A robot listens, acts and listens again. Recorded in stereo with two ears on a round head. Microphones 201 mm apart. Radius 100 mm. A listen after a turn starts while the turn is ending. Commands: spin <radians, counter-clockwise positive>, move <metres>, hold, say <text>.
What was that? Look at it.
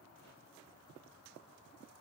hold
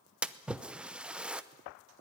spin -0.52
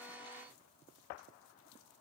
hold
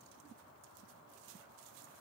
say I heard a splash, but can't make it out now. It was about 25° left or 145° right.